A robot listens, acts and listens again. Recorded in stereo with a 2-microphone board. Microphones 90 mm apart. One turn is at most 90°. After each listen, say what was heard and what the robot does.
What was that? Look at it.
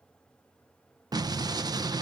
The explosion: about 50° right or 130° right. Turn 50° right.
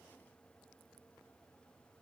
Keep listening.
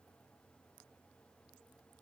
I heard an explosion, but can't make it out now. It was about straight ahead or 80° right.